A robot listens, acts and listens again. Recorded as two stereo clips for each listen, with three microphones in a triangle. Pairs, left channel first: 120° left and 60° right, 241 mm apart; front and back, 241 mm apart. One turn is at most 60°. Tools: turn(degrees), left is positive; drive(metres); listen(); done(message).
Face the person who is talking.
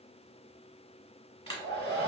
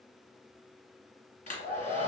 listen()
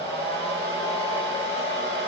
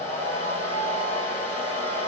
listen()
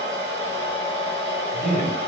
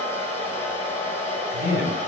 turn(degrees=60)
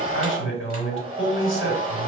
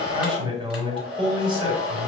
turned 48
turn(degrees=60)
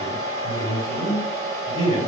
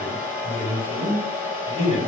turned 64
turn(degrees=50)
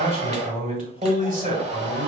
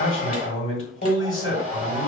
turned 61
turn(degrees=-10)
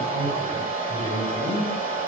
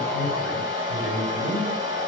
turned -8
done("Found it: a man speaking, straight ahead.")